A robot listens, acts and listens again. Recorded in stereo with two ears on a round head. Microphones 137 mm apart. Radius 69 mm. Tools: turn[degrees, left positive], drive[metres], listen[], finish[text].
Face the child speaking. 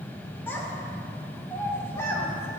Thought: The child speaking: about 20° left or 160° left.
Action: turn[20]
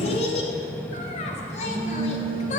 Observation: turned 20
Thought: So it is at 130° left.
Action: turn[130]
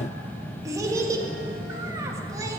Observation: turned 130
Thought: The child speaking is now 20° right.
Action: turn[-20]
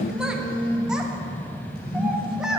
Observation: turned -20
Action: finish[Facing the child speaking.]